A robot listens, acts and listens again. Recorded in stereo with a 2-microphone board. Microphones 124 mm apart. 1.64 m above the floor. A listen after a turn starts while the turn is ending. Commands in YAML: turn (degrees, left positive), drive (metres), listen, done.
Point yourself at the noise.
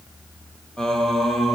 turn: 30
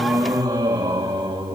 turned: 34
turn: -35
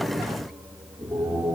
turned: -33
turn: -10
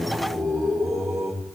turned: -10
done: "Facing the singing."